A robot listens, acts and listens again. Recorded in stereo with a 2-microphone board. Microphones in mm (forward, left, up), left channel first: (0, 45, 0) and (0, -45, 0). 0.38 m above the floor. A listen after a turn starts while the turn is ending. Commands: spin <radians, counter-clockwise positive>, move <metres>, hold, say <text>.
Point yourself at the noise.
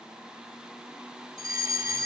spin -0.61
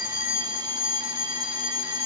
spin -1.83
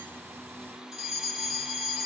say Found it: a fire alarm, straight ahead.